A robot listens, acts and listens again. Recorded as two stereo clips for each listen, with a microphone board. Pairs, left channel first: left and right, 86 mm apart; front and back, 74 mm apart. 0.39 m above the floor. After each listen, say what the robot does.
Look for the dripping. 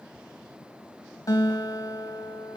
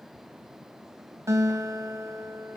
Keep listening.
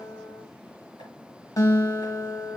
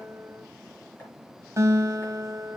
Keep listening.
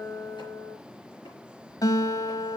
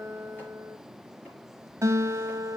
I can't make out dripping, only a guitar.